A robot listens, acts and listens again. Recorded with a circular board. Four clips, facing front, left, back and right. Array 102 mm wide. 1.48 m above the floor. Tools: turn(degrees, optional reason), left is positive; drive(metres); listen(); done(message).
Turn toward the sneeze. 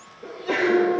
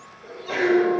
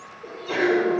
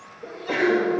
turn(degrees=-45, reason="The sneeze: 45° right.")
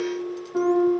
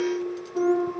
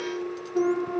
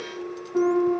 done("I heard a sneeze from this way, but can't make it out now.")